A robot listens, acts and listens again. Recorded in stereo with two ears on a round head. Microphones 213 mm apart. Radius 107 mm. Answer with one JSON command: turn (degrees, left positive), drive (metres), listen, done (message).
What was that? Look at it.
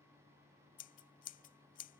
{"turn": 35}
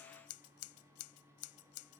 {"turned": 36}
{"turn": 110}
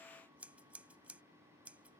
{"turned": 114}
{"done": "Found it: scissors, straight ahead."}